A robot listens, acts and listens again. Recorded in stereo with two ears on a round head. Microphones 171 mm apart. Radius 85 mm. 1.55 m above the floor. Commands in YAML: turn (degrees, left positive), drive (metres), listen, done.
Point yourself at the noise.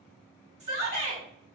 turn: -35
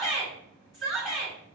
done: "Found it: a shout, straight ahead, 1 to 2 m away."